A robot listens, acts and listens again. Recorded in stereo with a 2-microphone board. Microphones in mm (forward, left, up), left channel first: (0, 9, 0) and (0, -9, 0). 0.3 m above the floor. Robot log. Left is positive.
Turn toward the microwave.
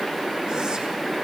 cmd idle
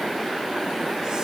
cmd idle
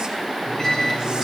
note: The microwave: about 25° left or 155° left.
cmd yaw +25
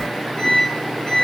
note: So it is at 135° left.
cmd yaw +135
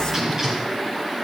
note: The microwave is now 25° right.
cmd yaw -25
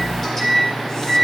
note: The microwave is now 15° left.
cmd yaw +15
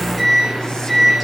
end: Facing the microwave.